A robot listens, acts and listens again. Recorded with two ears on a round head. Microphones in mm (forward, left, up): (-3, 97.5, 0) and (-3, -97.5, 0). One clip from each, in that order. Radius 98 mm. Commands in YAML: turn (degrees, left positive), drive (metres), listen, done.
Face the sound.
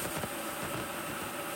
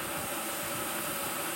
listen: true
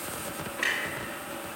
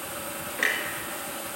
turn: -35
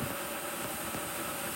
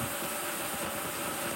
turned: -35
listen: true
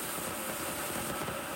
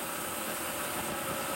done: "I heard a clunk, but can't make it out now. It was about straight ahead or 110° right."